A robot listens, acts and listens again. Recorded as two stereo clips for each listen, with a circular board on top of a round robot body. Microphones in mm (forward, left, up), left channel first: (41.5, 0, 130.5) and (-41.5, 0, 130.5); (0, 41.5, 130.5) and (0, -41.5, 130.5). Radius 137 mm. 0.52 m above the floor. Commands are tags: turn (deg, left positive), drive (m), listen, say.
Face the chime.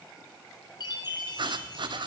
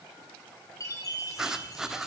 <turn deg="40"/>
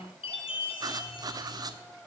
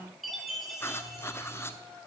<say>Facing the chime, 1 to 2 m away.</say>